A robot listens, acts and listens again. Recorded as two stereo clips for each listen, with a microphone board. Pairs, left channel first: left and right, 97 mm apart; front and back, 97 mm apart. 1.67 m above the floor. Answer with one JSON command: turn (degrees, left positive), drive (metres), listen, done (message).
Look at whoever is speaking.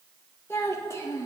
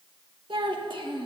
{"turn": 145}
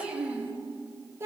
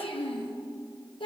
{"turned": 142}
{"turn": -30}
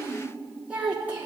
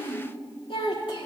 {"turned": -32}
{"turn": -20}
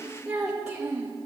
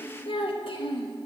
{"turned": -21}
{"turn": -15}
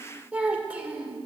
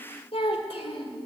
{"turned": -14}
{"turn": -10}
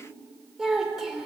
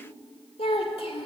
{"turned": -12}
{"done": "Found it: a child speaking, straight ahead, 1 to 2 m away."}